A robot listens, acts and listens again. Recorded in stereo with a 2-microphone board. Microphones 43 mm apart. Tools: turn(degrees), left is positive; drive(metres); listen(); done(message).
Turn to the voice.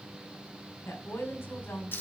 turn(degrees=70)
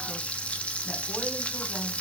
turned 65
listen()
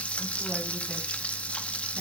listen()
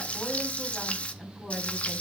done("Facing the woman speaking, over 4 m away.")